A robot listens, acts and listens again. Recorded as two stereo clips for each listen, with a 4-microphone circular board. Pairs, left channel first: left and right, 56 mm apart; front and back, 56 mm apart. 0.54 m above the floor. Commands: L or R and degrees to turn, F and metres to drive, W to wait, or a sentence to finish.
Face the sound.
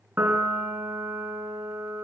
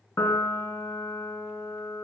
R35
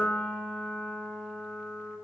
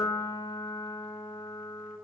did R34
Facing the piano, 2 to 4 m away.